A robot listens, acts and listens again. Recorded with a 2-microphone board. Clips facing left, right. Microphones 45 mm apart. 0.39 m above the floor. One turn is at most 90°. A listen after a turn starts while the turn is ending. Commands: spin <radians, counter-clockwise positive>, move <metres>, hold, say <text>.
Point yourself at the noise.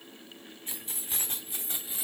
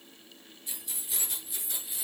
spin 0.44
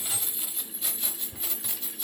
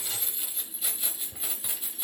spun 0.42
spin -0.35
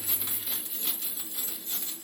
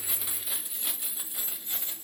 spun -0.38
spin -0.52
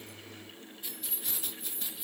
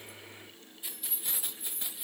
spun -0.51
spin -0.26
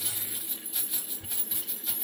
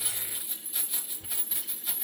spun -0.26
say Found it: keys jangling, straight ahead, 1 to 2 m away.